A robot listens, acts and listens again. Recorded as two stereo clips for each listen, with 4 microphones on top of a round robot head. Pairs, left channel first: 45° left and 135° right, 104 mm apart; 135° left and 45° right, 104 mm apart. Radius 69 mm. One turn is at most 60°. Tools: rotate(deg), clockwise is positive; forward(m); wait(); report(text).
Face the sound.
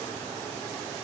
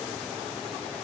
wait()
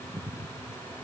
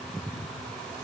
wait()
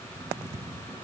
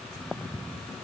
report("I can't make out anything.")